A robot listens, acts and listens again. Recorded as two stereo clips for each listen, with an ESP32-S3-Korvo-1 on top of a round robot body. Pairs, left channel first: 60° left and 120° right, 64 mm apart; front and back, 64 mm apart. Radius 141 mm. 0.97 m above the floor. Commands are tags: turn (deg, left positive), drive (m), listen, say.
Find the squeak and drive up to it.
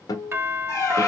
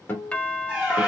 <turn deg="100"/>
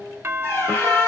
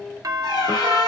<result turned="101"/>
<drive m="1.0"/>
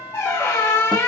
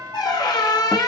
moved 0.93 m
<drive m="1.0"/>
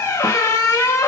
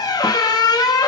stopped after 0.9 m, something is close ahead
<turn deg="10"/>
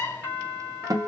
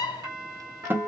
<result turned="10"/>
<say>Arrived at the squeak, straight ahead.</say>